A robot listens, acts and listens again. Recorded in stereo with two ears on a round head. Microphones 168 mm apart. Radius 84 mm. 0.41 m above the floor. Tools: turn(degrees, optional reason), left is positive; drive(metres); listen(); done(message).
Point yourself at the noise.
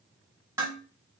turn(degrees=-15, reason="The dishes clattering: about 15° right or 165° right.")
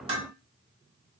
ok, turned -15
turn(degrees=-150, reason="So it is at 150° right.")
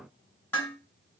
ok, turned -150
turn(degrees=10, reason="The dishes clattering is now 10° left.")
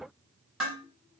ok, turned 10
done("Facing the dishes clattering.")